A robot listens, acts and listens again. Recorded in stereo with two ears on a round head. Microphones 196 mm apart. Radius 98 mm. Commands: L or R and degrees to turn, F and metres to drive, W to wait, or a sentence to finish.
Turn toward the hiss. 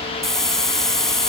L30
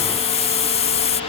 L150
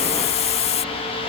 L35
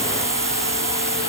R15
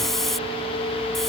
Facing the hiss.